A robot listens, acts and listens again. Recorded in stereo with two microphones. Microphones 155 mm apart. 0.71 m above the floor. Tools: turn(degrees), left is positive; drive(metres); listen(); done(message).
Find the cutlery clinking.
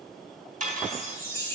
turn(degrees=-55)
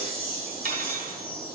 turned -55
turn(degrees=-70)
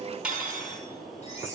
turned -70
done("Found it: cutlery clinking, straight ahead, 2 to 4 m away.")